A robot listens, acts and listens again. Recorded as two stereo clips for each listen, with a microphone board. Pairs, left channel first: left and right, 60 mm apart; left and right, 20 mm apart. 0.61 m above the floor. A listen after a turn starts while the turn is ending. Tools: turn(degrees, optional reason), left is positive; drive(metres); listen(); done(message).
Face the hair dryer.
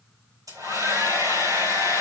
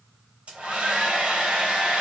turn(degrees=-90)
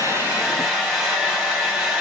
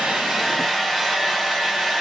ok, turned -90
done("Facing the hair dryer.")